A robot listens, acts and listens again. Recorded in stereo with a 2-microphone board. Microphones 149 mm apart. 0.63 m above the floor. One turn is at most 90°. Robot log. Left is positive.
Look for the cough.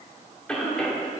cmd yaw +30
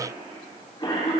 note: So it is at 145° left.
cmd yaw +90
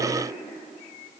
note: Nothing new. It was at 55° left.
cmd yaw +55
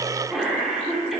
end: Found it: a cough, straight ahead, 1 to 2 m away.